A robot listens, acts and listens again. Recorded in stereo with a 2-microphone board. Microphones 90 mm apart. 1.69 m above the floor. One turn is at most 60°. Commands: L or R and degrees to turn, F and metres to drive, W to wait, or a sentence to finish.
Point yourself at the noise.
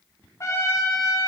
L35
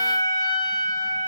L60
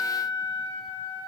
L60
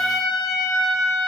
Found it: a trumpet, straight ahead.